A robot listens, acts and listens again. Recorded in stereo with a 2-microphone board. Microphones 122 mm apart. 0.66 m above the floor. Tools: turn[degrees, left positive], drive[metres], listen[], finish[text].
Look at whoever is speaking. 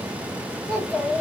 Action: turn[30]
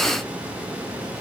Action: listen[]
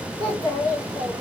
Thought: So it is at 145° left.
Action: turn[145]
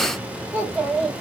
Thought: The child speaking is now 10° right.
Action: turn[-10]
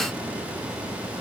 Action: listen[]
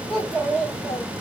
Action: finish[Found it: a child speaking, straight ahead, 2 to 4 m away.]